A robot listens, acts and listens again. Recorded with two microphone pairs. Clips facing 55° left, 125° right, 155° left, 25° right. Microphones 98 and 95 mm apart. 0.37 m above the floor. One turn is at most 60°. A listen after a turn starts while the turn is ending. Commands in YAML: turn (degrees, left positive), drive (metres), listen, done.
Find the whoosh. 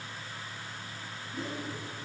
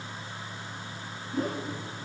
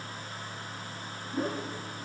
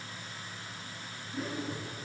turn: -60
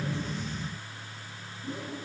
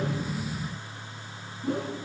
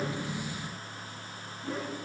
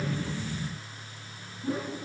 turn: -60
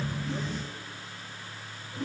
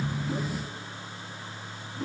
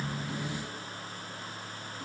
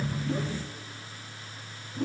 turn: -35
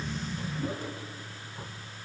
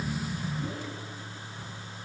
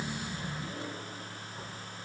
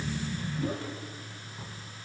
listen: true
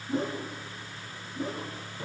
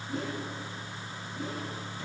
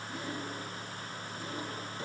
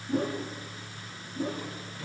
done: "Found it: a whoosh, straight ahead."